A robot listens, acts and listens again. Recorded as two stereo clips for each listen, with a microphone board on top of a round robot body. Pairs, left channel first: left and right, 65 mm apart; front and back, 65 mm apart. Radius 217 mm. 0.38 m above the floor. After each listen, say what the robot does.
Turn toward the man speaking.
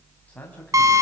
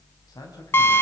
Turn 25° left.
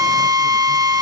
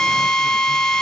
Keep listening.
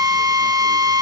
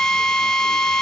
Keep listening.
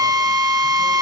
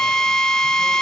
I heard a man speaking from this way, but can't make it out now.